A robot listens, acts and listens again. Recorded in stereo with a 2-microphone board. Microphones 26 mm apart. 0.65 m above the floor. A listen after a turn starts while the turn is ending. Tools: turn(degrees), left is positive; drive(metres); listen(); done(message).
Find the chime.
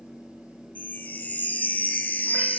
turn(degrees=90)
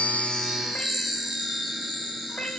done("Facing the chime, 1 to 2 m away.")